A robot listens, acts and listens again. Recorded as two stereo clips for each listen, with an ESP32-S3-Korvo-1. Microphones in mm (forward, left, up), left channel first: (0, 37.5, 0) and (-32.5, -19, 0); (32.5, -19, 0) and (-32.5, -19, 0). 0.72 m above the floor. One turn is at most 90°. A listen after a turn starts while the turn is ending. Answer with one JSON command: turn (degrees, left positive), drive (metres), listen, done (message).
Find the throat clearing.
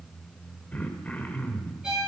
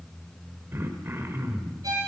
{"turn": 90}
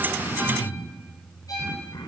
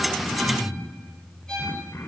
{"turn": 50}
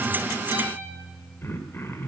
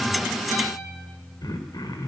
{"done": "Facing the throat clearing, 1 to 2 m away."}